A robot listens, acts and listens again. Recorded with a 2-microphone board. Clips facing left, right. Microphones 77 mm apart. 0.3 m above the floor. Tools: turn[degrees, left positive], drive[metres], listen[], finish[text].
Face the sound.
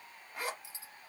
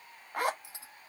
Thought: The zipper: about 60° right or 120° right.
Action: turn[-60]
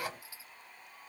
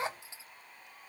Thought: So it is at 35° right.
Action: turn[-35]
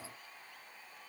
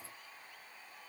Action: listen[]
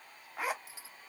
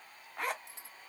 Action: finish[Facing the zipper, under 1 m away.]